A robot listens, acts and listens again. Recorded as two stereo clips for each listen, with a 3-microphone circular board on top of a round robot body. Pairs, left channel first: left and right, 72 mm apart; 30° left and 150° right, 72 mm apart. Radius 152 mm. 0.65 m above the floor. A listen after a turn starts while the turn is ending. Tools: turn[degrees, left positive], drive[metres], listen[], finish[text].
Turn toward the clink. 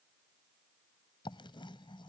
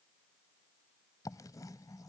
Action: listen[]
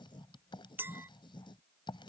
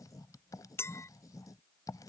Thought: The clink: 25° right.
Action: turn[-25]
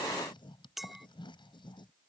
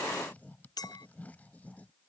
Action: finish[Facing the clink.]